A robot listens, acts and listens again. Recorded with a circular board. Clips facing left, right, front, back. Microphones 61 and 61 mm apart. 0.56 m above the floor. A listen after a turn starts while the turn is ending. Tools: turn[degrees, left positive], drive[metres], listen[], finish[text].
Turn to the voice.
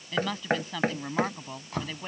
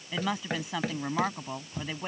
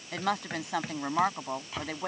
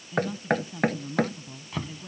Thought: The woman speaking: 15° right.
Action: turn[-15]
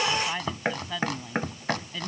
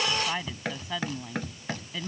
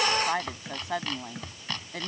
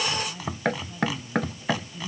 Action: finish[Found it: a woman speaking, straight ahead.]